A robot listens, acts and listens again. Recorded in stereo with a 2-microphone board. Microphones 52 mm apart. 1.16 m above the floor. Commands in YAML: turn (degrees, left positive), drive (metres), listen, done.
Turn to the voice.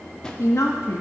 turn: 90
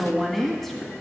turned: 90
turn: 10
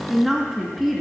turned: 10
done: "Found it: a woman speaking, straight ahead, 1 to 2 m away."